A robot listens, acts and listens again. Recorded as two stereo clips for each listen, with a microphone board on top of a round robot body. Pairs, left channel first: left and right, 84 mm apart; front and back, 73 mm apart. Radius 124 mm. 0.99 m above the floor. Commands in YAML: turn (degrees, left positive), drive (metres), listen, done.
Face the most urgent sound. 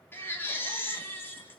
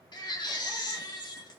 turn: 25
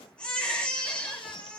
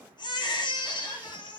turn: 15
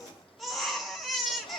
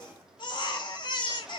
done: "Facing the baby crying."